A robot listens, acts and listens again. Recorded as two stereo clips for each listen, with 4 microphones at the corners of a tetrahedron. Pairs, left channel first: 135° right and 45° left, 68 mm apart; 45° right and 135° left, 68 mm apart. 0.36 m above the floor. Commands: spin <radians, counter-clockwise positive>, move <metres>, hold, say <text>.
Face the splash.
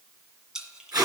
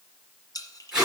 spin -0.61
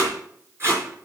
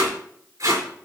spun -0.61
say Facing where the splash came from. I can't hear it now.